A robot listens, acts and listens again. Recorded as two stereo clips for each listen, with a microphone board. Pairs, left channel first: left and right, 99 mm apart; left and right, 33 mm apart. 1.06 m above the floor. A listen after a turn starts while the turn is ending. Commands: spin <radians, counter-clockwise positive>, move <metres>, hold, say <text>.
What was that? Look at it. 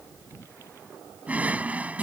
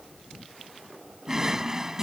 spin -0.26
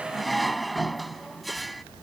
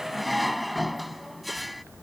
say Found it: a drawer, straight ahead.